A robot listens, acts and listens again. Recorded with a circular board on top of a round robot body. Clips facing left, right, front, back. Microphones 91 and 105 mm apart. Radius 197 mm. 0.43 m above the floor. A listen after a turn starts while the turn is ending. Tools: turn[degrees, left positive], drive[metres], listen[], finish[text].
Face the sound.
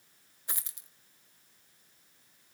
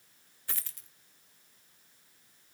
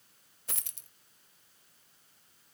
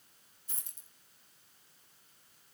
Thought: The dropped coin: 15° left.
Action: turn[15]
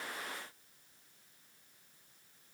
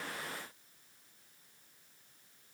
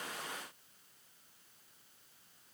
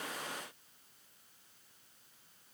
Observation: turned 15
Action: finish[I heard a dropped coin from this way, but can't make it out now.]